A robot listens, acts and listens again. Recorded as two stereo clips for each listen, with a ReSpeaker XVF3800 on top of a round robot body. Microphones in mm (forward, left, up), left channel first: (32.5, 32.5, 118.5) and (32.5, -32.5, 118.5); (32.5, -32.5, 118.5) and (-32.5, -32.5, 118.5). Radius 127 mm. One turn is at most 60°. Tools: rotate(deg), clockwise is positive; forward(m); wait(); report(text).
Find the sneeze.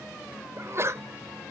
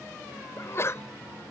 rotate(45)
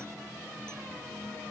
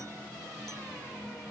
report("I heard a sneeze from this way, but can't make it out now.")